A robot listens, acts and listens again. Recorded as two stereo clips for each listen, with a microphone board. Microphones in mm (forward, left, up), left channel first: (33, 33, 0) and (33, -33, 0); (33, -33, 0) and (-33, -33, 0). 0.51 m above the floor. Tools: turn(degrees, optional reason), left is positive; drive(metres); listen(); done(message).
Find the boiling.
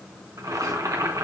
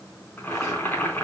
turn(degrees=-60, reason="The boiling: 60° right.")
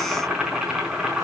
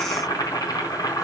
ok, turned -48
turn(degrees=-10, reason="The boiling is now 10° right.")
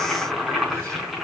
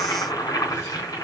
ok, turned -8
done("Facing the boiling, over 4 m away.")